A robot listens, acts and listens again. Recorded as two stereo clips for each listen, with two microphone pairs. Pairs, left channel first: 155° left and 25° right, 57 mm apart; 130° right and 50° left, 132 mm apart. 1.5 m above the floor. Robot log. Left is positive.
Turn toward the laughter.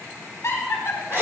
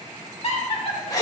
note: The laughter: 175° right.
cmd yaw -175
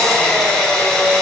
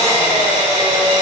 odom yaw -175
cmd idle
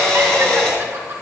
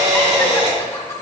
note: The laughter is now 65° right.
cmd yaw -65
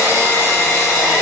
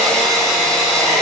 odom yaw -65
cmd idle
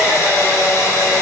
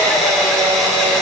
cmd idle
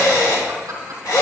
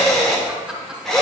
note: The laughter is now 35° right.
cmd yaw -35
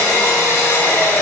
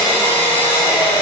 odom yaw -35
cmd idle
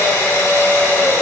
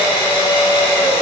cmd idle
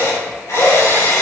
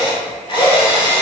end: I heard laughter from this way, but can't make it out now.